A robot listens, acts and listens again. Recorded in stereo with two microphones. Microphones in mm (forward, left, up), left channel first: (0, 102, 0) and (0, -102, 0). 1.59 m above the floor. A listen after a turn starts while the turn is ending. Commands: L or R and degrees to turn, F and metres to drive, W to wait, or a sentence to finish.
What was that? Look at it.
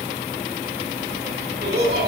R50
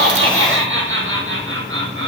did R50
R85
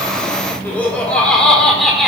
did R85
Found it: laughter, straight ahead, over 4 m away.